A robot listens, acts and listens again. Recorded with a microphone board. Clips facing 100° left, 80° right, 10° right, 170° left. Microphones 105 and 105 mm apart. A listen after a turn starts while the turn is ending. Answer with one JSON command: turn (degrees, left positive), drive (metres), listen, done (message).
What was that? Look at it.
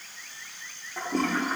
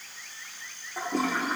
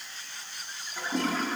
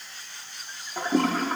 {"turn": -165}
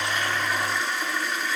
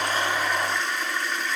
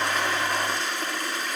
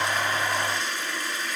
{"turn": 15}
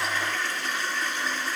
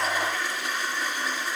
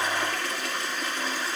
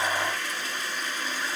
{"done": "Facing the toilet flushing, 1 to 2 m away."}